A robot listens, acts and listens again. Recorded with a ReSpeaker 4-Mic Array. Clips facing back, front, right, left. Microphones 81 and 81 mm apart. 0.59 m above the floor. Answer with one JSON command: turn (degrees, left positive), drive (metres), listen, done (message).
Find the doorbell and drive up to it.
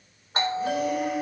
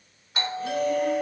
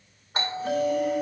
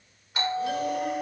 {"turn": -140}
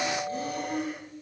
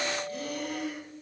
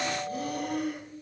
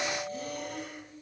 {"drive": 1.0}
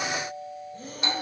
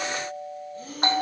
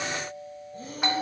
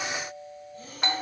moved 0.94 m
{"turn": -10}
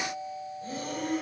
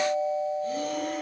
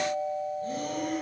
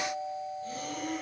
{"drive": 1.0}
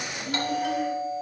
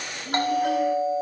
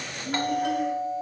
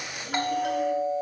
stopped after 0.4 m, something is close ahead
{"turn": 10}
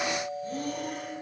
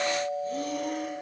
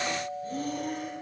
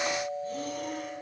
{"done": "Arrived at the doorbell, straight ahead."}